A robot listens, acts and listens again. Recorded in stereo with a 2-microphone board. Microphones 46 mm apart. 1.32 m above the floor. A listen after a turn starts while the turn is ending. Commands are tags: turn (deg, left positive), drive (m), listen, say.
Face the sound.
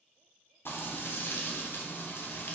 <turn deg="55"/>
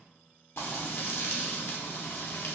<turn deg="65"/>
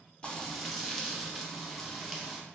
<say>Facing the frying.</say>